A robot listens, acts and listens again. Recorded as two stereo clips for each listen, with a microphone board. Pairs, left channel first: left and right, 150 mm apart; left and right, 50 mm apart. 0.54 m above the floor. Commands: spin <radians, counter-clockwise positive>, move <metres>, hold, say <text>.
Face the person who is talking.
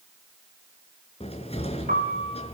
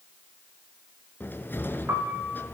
hold
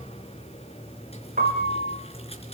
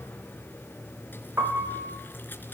hold
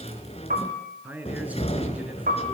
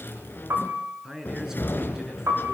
spin -0.52
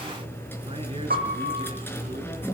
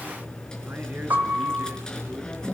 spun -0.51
hold
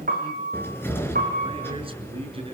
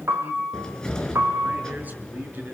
hold
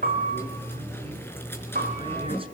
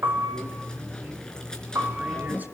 say I heard a man speaking, but can't make it out now. It was about 20° left or 140° right.